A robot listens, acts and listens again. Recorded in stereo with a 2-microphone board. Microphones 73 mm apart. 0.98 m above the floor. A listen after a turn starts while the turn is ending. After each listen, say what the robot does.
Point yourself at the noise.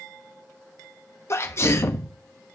Turn 35° left.
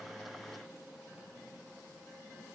Keep listening.
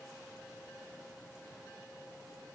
I heard a sneeze, but can't make it out now. It was about straight ahead or 110° left.